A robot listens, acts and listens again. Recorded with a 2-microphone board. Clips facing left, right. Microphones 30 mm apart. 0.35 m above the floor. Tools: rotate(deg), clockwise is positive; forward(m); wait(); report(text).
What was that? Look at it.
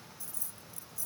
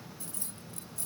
rotate(55)
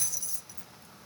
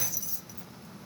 rotate(10)
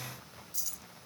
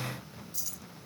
report("Found it: keys jangling, straight ahead.")